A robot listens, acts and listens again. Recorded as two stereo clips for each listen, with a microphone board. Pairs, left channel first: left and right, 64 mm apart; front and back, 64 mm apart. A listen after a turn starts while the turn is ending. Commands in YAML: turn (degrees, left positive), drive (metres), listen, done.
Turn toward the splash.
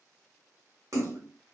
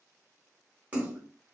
turn: -115
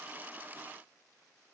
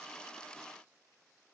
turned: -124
done: "Facing where the splash came from. I can't hear it now."